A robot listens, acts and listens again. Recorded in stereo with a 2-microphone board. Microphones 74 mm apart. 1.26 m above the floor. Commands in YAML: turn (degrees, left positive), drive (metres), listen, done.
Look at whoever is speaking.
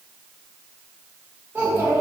turn: -30
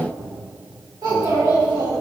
turn: -115
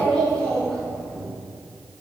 turn: 10
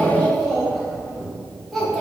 done: "Facing the child speaking."